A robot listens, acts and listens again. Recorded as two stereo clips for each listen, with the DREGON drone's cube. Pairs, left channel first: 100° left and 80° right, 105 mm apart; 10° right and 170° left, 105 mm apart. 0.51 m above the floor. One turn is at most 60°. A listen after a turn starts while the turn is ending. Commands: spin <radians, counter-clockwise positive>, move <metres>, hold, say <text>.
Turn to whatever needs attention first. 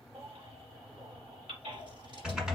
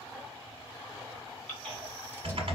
spin -1.05
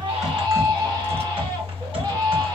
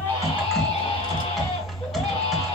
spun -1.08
spin -0.52
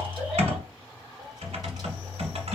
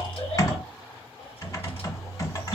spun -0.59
hold
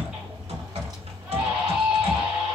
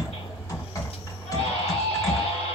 say Facing the baby crying.